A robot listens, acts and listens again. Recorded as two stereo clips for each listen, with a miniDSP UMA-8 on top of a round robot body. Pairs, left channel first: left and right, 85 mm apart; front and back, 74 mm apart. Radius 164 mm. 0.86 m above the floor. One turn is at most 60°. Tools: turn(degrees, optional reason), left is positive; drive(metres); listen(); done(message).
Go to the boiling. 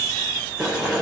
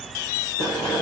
drive(metres=1.0)
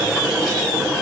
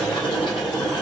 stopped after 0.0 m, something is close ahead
turn(degrees=-10, reason="The boiling is now 10° right.")
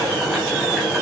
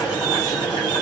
done("Blocked. The boiling is further on, straight ahead.")